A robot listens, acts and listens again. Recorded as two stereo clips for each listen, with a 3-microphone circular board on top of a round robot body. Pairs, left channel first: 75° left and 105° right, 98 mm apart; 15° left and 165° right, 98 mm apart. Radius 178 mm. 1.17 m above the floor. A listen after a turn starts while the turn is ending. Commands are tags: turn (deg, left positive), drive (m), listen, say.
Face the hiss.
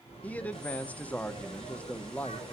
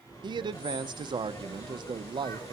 <listen/>
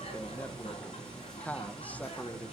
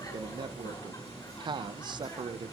<listen/>
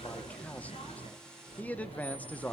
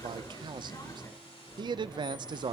<say>I can't make out a hiss to turn to.</say>